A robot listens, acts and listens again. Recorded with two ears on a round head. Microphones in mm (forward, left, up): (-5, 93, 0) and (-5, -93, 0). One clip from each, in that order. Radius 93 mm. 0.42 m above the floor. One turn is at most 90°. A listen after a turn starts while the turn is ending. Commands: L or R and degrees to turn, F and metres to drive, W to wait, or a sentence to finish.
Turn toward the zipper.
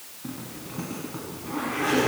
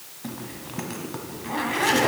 R90
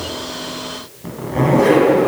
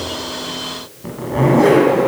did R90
Found it: a zipper, straight ahead.